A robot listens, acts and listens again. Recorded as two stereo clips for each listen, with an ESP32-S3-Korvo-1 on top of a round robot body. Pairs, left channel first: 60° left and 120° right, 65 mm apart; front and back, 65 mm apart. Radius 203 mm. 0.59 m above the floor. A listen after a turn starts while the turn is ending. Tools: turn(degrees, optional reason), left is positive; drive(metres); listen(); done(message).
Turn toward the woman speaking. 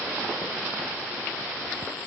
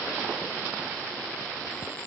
listen()
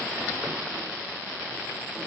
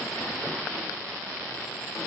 listen()
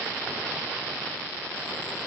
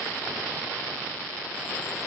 done("I can't make out a woman speaking.")